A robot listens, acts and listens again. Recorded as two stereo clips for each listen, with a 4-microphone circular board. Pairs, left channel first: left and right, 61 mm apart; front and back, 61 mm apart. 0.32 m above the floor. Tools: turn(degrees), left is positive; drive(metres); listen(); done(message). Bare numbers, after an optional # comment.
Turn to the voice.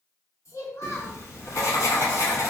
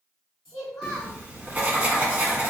# The child speaking: 85° left.
turn(85)
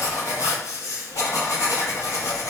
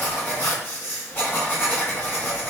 listen()
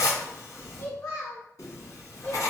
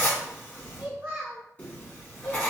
# The child speaking is now 125° left.
turn(125)
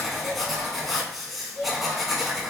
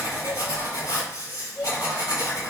# The child speaking is now 70° left.
turn(70)
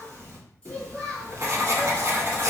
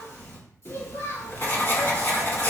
# The child speaking is now 20° left.
turn(20)
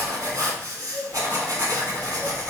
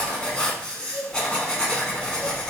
done("Found it: a child speaking, straight ahead.")